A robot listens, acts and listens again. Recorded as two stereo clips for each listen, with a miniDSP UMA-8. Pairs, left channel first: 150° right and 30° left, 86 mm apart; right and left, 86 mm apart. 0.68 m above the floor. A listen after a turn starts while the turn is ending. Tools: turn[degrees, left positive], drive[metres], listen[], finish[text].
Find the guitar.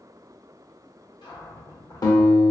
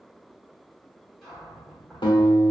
Thought: The guitar: 110° right.
Action: turn[-110]
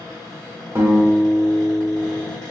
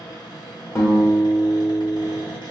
Thought: The guitar is now 30° right.
Action: turn[-30]
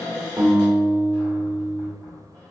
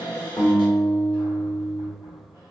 Thought: The guitar is now 15° right.
Action: turn[-15]
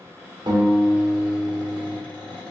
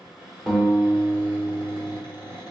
Action: finish[Facing the guitar, under 1 m away.]